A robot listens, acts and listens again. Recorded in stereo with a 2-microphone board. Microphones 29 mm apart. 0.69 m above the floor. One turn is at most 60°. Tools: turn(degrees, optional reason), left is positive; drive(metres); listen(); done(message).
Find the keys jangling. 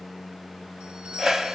listen()
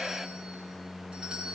listen()
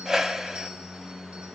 done("I can't make out keys jangling, only a whoosh.")